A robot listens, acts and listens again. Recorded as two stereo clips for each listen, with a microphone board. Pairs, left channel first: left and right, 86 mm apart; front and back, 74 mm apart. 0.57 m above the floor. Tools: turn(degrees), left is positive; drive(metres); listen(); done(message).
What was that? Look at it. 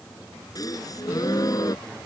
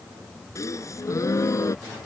turn(degrees=45)
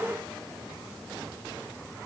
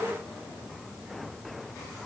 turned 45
done("I heard a gasp from this way, but can't make it out now.")